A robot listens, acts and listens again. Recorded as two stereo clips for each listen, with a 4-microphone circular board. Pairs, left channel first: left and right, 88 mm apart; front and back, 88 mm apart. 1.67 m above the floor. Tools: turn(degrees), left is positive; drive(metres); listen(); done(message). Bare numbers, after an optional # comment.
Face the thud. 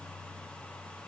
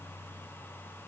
listen()
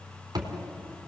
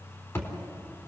# The thud: 55° right.
turn(-55)
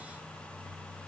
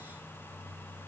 done("I heard a thud from this way, but can't make it out now.")